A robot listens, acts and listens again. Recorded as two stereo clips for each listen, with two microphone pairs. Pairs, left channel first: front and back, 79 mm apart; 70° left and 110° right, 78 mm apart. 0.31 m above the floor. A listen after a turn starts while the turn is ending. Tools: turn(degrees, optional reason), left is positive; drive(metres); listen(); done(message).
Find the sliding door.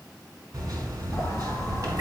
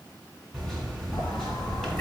turn(degrees=50, reason="The sliding door: 50° left.")
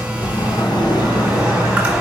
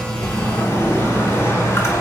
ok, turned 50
turn(degrees=10, reason="The sliding door is now 10° left.")
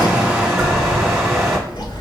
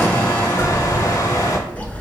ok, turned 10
done("Facing the sliding door, under 1 m away.")